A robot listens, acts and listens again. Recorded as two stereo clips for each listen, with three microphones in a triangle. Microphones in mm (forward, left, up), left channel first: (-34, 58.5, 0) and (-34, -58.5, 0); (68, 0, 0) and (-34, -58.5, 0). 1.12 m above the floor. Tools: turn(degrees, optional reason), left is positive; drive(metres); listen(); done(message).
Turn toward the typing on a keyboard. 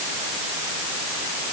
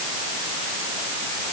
listen()
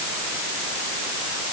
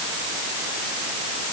listen()
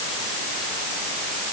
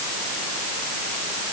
done("I can't make out typing on a keyboard.")